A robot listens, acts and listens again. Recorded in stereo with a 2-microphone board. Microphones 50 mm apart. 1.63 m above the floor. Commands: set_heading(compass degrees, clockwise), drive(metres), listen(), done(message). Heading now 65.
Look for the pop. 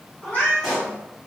set_heading(35)
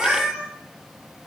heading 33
listen()
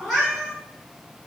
done("I heard a pop, but can't make it out now. It was about 35° right or 150° left.")